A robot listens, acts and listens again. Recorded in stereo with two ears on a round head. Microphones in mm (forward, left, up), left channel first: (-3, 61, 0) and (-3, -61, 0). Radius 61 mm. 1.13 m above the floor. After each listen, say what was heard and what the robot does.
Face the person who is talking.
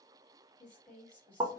Turn 30° left.
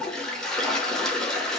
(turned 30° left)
Keep listening.
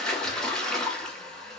Keep listening.
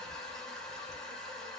I heard a woman speaking, but can't make it out now. It was about 20° right or 140° left.